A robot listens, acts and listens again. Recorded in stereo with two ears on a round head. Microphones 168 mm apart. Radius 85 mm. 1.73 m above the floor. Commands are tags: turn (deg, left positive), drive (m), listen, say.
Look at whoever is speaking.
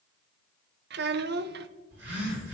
<turn deg="-60"/>
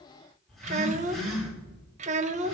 <turn deg="-45"/>
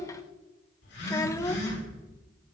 <turn deg="15"/>
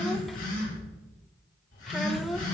<say>Found it: a child speaking, straight ahead, 1 to 2 m away.</say>